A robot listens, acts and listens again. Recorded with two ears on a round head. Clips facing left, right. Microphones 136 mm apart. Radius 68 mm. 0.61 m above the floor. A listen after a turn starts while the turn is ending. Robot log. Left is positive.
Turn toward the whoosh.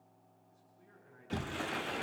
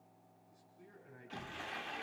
cmd idle
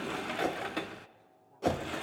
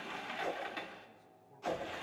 note: The whoosh: about 65° left or 115° left.
cmd yaw +65
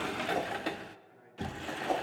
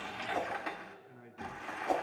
end: Facing the whoosh.